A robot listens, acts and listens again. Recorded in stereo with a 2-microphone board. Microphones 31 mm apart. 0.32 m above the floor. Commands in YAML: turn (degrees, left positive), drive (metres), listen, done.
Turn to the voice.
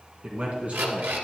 turn: -45
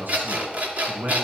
turn: -90
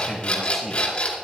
done: "Found it: a man speaking, straight ahead."